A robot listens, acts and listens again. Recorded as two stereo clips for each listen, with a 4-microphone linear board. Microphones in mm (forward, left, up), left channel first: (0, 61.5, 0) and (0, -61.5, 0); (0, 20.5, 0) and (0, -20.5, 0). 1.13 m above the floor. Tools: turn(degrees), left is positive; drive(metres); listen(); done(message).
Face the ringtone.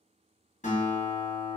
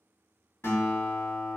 listen()
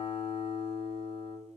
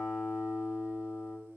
listen()
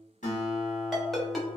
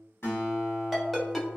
turn(degrees=30)
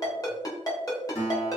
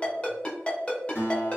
turn(degrees=150)
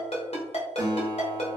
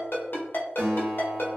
turn(degrees=55)
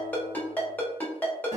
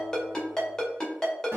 turn(degrees=15)
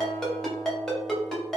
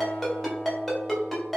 done("Found it: a ringtone, straight ahead, under 1 m away.")